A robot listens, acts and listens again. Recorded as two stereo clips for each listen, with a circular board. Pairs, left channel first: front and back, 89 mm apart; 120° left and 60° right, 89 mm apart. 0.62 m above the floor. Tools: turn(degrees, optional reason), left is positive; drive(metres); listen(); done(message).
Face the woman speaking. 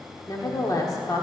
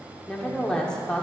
turn(degrees=40, reason="The woman speaking: 40° left.")
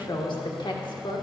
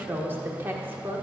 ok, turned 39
done("Facing the woman speaking, 1 to 2 m away.")